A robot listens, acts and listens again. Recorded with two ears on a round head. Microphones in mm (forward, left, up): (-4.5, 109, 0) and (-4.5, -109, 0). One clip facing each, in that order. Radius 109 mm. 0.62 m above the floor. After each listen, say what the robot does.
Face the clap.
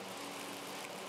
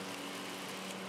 Keep listening.
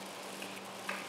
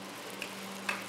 Turn 60° right.
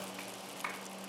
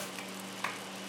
Turn 55° right.
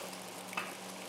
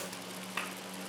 Turn 25° right.
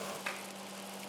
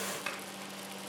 Turn 10° right.
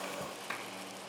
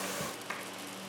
Found it: a clap, straight ahead, 2 to 4 m away.